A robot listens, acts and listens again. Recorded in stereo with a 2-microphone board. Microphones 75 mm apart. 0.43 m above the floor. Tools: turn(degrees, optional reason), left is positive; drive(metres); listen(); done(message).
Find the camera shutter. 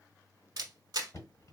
turn(degrees=-60, reason="The camera shutter: about 60° right or 120° right.")
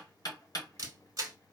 turn(degrees=-55, reason="So it is at 55° right.")
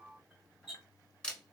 turn(degrees=10, reason="The camera shutter is now 10° left.")
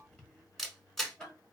done("Facing the camera shutter, under 1 m away.")